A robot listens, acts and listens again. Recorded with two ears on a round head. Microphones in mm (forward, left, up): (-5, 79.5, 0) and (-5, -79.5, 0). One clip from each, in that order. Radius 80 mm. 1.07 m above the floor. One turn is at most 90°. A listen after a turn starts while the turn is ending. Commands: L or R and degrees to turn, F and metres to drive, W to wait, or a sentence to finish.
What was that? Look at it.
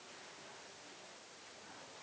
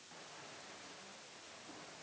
W
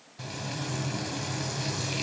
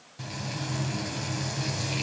L30
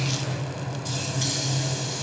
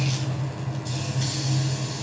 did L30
L90
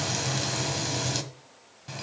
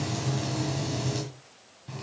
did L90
L55
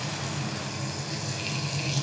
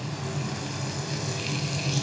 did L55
Found it: frying, straight ahead, 1 to 2 m away.